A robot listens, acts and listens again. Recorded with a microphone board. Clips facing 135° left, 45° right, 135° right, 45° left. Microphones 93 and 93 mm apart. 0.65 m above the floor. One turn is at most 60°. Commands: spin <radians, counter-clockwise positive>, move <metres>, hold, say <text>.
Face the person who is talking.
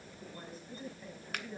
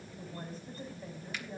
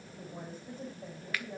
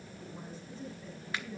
spin -1.05
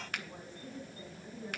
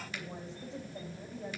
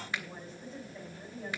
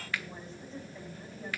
spin -1.05
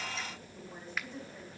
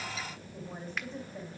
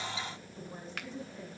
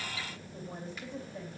say Found it: a woman speaking, straight ahead, over 4 m away.